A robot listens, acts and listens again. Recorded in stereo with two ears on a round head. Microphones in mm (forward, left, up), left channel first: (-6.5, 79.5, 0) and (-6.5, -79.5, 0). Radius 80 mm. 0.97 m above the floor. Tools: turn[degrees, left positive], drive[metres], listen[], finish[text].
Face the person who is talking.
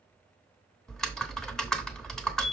Action: listen[]
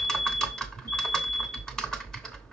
Action: listen[]
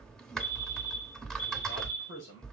Thought: The man speaking: about 75° left or 105° left.
Action: turn[75]
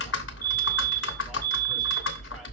Action: listen[]
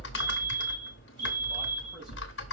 Action: listen[]
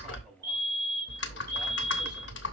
Action: finish[I heard a man speaking, but can't make it out now. It was about straight ahead or 30° left.]